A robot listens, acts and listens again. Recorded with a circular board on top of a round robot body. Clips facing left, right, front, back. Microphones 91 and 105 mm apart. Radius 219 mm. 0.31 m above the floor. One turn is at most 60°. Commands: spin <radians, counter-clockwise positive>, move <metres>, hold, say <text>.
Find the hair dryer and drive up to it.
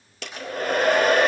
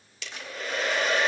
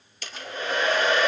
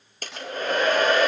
spin 1.05
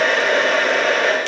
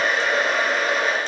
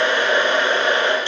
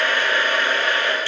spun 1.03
spin 1.05
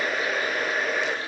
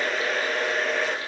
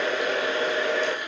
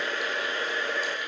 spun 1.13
move 1.0
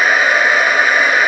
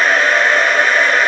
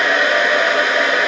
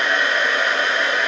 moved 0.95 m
move 1.0
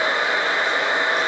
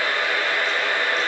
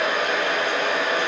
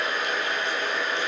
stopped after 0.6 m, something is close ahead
spin 0.35
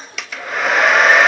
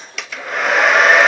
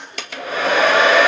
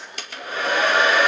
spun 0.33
say Arrived at the hair dryer, straight ahead.